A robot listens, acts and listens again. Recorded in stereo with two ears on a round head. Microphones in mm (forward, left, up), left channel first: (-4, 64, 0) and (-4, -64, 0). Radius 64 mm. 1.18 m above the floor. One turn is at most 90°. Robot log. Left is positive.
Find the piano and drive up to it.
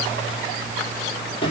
cmd idle
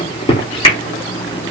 cmd idle
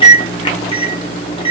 end: I can't make out a piano, only a microwave.